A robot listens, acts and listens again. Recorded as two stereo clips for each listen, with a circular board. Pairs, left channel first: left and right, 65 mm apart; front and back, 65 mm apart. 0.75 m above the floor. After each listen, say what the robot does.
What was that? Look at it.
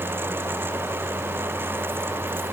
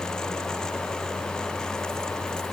Keep listening.
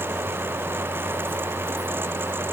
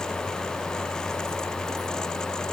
Keep listening.
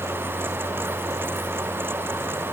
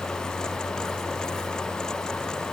I can't make out anything.